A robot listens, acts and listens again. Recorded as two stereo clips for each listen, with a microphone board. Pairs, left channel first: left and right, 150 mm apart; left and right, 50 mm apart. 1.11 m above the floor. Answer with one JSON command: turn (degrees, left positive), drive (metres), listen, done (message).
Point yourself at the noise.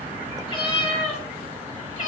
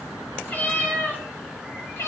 {"turn": 55}
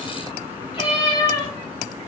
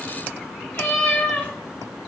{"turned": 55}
{"turn": 30}
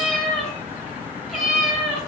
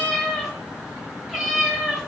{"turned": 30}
{"done": "Found it: a cat meowing, straight ahead."}